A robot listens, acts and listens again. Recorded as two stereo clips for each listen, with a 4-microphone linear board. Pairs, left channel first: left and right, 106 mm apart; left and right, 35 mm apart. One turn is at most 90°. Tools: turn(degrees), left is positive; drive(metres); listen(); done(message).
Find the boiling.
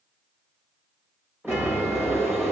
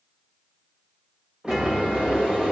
turn(degrees=-25)
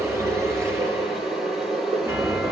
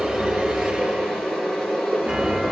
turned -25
done("Facing the boiling, over 4 m away.")